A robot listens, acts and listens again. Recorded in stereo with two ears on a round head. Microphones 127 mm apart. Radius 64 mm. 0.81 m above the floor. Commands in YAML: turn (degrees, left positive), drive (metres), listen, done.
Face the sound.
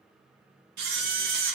turn: -90
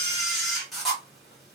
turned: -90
done: "Facing the camera shutter, 1 to 2 m away."